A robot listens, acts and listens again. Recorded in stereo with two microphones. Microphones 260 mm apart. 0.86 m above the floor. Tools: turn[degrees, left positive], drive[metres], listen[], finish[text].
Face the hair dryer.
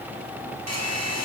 Action: turn[-90]
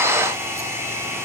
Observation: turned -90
Thought: So it is at 10° right.
Action: turn[-10]
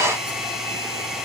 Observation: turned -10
Action: finish[Facing the hair dryer, over 4 m away.]